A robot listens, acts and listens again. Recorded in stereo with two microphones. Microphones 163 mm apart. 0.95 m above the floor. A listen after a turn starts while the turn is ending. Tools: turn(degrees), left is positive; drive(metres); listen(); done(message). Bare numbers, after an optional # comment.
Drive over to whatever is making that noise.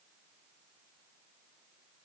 listen()
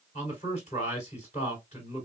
# The man speaking: about 45° left or 135° left.
turn(45)
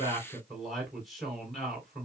drive(1.0)
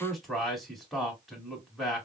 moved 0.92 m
drive(1.0)
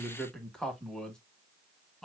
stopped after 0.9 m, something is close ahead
done("I am next to the man speaking.")